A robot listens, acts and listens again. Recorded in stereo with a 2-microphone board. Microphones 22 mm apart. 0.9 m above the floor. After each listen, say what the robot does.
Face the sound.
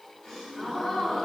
Turn 40° left.
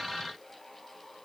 Keep listening.
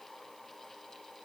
I heard a gasp, but can't make it out now. It was about straight ahead or 100° left.